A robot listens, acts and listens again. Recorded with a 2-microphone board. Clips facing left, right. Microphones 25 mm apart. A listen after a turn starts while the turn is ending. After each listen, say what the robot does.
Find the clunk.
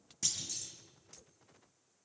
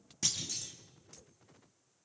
Turn 15° right.
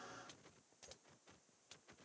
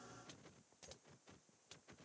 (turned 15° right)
Keep listening.
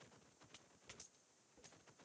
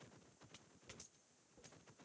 I heard a clunk, but can't make it out now. It was about straight ahead or 150° right.